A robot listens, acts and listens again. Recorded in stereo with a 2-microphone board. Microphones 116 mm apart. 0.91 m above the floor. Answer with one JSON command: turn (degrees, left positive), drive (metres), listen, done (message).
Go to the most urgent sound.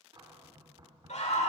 {"turn": 90}
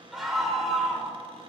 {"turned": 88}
{"drive": 1.0}
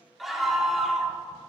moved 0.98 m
{"drive": 1.0}
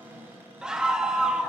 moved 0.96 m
{"drive": 1.0}
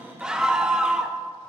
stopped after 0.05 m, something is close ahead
{"done": "Arrived at the scream, straight ahead."}